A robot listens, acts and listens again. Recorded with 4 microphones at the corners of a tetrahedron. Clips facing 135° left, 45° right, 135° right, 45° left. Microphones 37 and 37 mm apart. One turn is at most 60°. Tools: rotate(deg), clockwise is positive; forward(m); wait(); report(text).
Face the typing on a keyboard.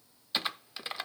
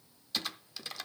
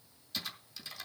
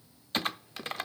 rotate(-60)
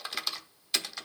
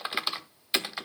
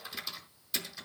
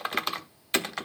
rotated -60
rotate(-20)
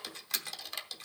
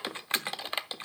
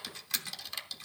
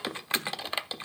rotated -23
report("Facing the typing on a keyboard.")